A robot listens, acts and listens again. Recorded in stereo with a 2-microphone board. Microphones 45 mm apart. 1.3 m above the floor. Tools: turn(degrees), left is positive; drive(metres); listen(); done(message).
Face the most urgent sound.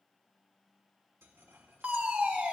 turn(degrees=-30)
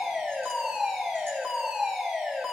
turn(degrees=-10)
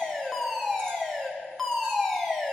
done("Facing the fire alarm.")